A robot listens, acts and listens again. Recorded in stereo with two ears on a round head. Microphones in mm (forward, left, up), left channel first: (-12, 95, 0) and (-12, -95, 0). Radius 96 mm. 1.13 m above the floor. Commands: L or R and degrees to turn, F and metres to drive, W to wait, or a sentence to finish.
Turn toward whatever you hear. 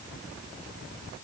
W
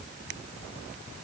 W
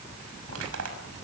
R90
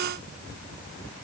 W
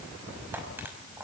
R10
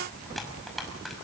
Facing the crushing, over 4 m away.